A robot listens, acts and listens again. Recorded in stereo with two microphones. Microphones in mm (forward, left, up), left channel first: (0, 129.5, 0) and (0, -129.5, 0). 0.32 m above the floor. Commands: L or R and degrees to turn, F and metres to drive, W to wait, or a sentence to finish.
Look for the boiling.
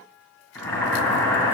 L30
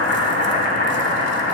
L140
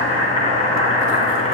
L25
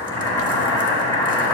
L15
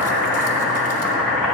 Found it: boiling, straight ahead.